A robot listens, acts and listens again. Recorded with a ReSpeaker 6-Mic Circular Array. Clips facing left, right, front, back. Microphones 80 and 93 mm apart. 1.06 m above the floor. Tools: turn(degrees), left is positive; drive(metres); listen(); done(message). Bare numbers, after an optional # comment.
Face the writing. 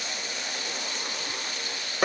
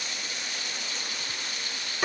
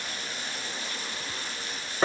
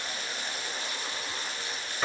listen()
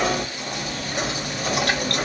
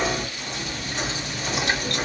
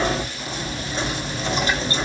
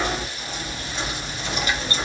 listen()
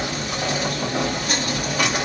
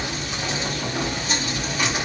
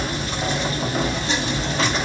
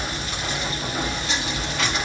done("I can't make out writing, only knocking.")